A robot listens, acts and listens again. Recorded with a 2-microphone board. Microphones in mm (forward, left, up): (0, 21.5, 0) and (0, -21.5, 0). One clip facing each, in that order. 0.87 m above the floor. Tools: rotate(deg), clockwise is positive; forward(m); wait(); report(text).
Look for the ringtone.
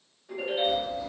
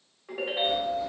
rotate(90)
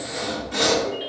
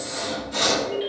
rotate(-10)
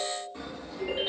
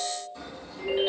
report("Found it: a ringtone, straight ahead, 1 to 2 m away.")